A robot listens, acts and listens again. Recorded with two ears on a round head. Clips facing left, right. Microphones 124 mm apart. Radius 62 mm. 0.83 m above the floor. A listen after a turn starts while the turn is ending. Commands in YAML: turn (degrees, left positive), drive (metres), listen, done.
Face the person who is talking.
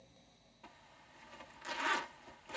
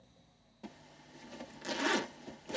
listen: true
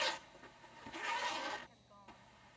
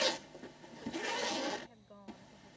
turn: -60
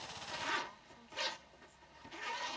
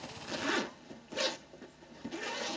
listen: true
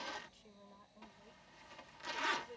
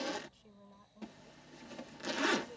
done: "Facing the woman speaking."